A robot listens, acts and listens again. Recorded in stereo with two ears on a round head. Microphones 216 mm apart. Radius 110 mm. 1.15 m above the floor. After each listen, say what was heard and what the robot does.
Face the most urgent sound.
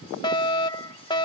The fire alarm: about 20° left or 160° left. Turn 20° left.
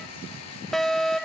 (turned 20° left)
Facing the fire alarm.